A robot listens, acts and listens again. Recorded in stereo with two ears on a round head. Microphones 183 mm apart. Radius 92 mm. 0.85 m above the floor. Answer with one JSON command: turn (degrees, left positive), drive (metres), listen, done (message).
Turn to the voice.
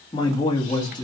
{"turn": 20}
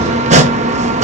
{"listen": true}
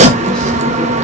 {"listen": true}
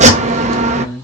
{"done": "Facing the man speaking, 1 to 2 m away."}